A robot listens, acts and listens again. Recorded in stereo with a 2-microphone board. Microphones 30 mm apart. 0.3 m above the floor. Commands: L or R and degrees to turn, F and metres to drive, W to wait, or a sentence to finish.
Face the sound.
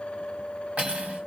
R55
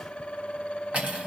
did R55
R60
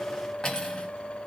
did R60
L30
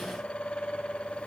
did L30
W
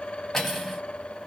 L10
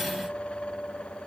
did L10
W
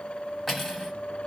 Facing the cutlery clinking, 1 to 2 m away.